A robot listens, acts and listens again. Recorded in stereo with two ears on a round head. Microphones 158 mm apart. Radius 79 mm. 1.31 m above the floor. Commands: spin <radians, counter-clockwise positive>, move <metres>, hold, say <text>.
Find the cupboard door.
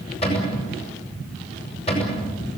spin 0.61
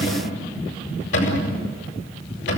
spin 1.92
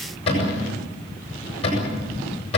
spin 0.52
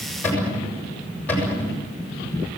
spin 0.17
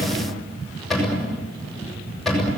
say Facing the cupboard door, over 4 m away.